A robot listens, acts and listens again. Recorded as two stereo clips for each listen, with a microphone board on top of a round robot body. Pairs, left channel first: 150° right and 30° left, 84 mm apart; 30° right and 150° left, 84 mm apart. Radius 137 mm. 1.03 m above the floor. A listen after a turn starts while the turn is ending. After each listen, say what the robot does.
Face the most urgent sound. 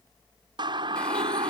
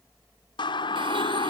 Facing the siren.